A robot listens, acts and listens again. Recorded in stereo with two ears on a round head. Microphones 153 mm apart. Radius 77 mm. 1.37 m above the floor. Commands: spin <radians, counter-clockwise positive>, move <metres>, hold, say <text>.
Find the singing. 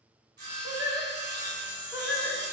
spin -0.52
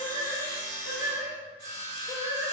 spin -0.35
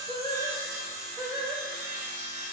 spin -2.62
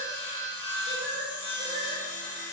spin -0.96
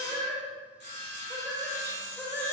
spin 0.26
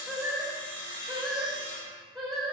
say Facing the singing.